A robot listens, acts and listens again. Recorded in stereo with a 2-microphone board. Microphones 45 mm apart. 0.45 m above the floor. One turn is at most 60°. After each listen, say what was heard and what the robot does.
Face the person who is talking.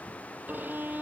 Keep listening.
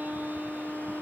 Keep listening.
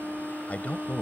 The man speaking: about 30° left or 150° left. Turn 30° left.
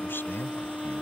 So it is at 115° left. Turn 60° left.
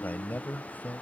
The man speaking is now 50° left. Turn 50° left.
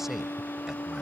Keep listening.
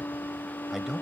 Facing the man speaking.